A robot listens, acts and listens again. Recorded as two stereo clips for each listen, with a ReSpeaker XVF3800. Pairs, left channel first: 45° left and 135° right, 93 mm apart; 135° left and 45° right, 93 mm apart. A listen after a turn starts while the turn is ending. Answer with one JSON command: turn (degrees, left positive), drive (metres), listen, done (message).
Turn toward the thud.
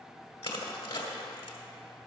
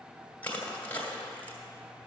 {"listen": true}
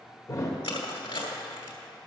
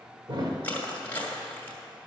{"turn": -10}
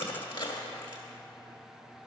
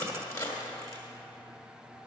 {"done": "Facing where the thud came from. I can't hear it now."}